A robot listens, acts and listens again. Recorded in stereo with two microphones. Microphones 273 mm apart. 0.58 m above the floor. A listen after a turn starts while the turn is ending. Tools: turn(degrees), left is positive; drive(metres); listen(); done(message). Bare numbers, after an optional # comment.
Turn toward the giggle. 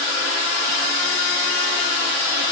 listen()
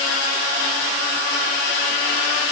listen()
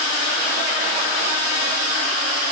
done("I can't make out a giggle to turn to.")